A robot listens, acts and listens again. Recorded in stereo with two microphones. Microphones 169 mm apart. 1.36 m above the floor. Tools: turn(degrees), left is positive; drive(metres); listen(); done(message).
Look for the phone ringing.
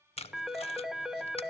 turn(degrees=-30)
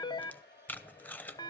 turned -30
turn(degrees=25)
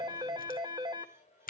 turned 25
turn(degrees=-25)
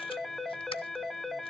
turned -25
done("Found it: a phone ringing, straight ahead.")